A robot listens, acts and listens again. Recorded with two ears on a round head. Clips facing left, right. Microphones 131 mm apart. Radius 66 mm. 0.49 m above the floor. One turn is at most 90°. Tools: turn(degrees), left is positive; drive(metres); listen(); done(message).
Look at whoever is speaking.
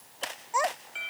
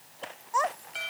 turn(degrees=30)
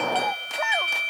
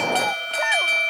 listen()
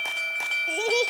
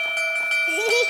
listen()
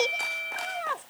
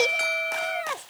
turn(degrees=-15)
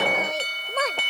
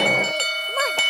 listen()
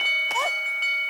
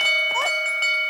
listen()
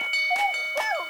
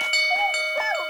done("Found it: a child speaking, straight ahead.")